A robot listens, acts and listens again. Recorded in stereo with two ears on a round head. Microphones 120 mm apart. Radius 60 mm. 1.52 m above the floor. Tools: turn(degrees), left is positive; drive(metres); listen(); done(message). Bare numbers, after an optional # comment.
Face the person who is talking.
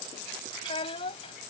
# The child speaking: about 40° left or 140° left.
turn(40)
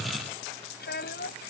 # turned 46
# So it is at 100° left.
turn(100)
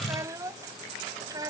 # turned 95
# The child speaking is now 30° right.
turn(-30)
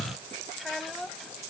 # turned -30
done("Facing the child speaking.")